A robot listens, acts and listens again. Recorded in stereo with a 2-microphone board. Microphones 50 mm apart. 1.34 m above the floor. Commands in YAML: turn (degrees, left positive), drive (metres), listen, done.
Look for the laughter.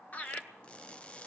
turn: 30
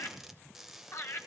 turn: 120
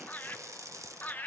turn: 30
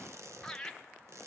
turn: 10
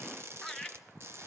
done: "Facing the laughter."